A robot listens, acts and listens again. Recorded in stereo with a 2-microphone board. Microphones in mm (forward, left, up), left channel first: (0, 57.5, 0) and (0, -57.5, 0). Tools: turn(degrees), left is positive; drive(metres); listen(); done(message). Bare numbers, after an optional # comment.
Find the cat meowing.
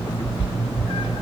# The cat meowing: about 55° left or 125° left.
turn(55)
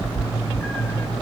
# So it is at 20° left.
turn(20)
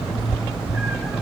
done("Facing the cat meowing, 1 to 2 m away.")